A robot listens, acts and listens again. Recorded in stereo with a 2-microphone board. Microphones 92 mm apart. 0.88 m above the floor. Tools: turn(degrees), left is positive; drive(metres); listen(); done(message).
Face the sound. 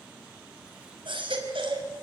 turn(degrees=-65)
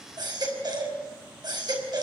turn(degrees=-50)
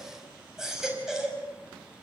done("Facing the baby crying, over 4 m away.")